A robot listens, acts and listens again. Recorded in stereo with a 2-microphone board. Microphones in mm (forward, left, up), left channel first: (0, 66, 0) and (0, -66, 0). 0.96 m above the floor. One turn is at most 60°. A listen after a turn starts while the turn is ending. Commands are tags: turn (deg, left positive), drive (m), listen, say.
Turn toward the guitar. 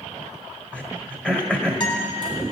<turn deg="35"/>
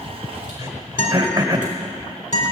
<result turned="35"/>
<turn deg="60"/>
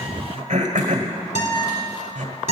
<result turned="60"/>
<turn deg="60"/>
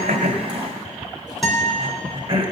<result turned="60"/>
<say>Found it: a guitar, straight ahead.</say>